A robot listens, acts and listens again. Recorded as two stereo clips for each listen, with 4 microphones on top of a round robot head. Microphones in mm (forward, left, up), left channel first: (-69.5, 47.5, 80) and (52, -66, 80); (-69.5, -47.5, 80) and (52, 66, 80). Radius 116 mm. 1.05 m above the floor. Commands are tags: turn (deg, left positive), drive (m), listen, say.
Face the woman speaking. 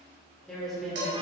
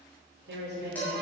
<turn deg="45"/>
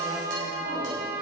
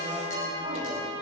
<listen/>
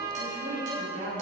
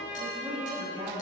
<turn deg="-15"/>
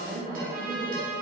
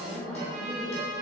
<turn deg="-10"/>
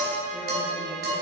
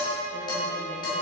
<listen/>
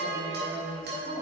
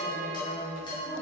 <say>Found it: a woman speaking, straight ahead.</say>